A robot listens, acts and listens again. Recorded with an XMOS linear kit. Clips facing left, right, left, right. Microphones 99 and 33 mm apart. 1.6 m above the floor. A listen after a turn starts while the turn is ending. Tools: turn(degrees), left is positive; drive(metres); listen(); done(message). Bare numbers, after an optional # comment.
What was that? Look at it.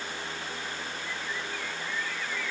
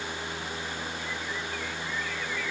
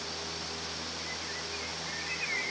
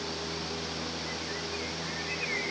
listen()
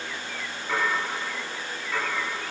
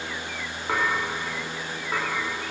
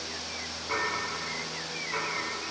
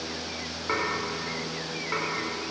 # The dishes clattering: about 45° right or 135° right.
turn(-45)
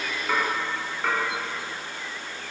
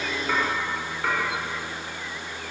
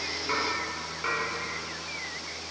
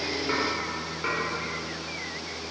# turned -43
done("Facing the dishes clattering.")